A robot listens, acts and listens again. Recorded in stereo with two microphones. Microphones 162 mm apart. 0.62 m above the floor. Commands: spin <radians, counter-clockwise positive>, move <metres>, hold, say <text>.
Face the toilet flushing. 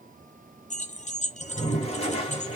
spin 0.70
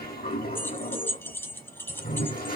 spin 1.66
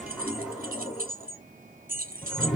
say Facing the toilet flushing, 2 to 4 m away.